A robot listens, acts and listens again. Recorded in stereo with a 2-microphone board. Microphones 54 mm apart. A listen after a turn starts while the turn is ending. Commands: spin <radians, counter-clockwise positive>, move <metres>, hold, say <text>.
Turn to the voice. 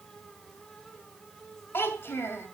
spin 0.87
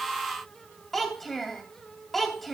say Facing the child speaking, 2 to 4 m away.